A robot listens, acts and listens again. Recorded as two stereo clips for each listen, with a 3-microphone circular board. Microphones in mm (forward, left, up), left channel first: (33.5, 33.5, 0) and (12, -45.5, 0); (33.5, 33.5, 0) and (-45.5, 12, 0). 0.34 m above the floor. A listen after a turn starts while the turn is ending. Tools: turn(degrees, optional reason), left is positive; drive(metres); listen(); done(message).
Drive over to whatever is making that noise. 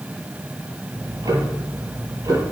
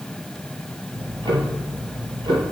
turn(degrees=-145, reason="The ticking: 145° right.")
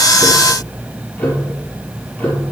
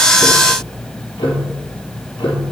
drive(metres=1.0)
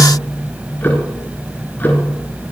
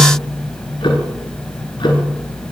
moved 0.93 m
turn(degrees=10, reason="The ticking is now 10° left.")
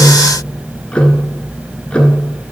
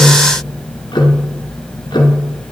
drive(metres=1.0)
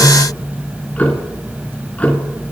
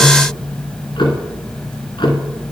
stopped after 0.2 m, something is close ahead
done("I am next to the ticking.")